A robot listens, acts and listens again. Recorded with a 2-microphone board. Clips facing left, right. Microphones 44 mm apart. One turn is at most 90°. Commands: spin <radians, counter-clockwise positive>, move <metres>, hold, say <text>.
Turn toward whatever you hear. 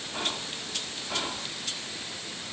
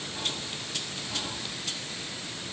spin 0.96
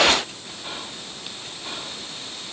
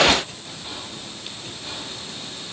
spin 0.44
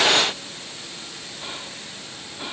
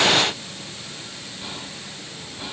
spin 0.35
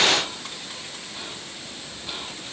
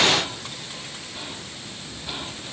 say Facing the whispering, 1 to 2 m away.